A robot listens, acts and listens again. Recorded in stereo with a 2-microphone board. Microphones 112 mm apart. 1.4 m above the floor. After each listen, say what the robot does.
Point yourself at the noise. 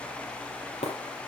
Turn 90° left.
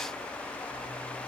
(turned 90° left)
I heard breaking glass from this way, but can't make it out now.